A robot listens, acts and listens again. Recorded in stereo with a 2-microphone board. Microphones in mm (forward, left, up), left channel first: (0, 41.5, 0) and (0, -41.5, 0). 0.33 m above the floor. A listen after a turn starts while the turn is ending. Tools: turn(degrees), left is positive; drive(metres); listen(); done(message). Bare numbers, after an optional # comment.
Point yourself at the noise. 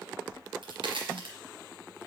turn(-90)
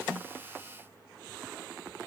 done("I heard a crack from this way, but can't make it out now.")